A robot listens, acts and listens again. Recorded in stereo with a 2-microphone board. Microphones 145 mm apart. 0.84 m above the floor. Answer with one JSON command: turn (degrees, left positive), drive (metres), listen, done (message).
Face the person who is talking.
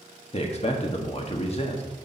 {"turn": 45}
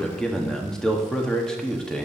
{"done": "Facing the man speaking, 1 to 2 m away."}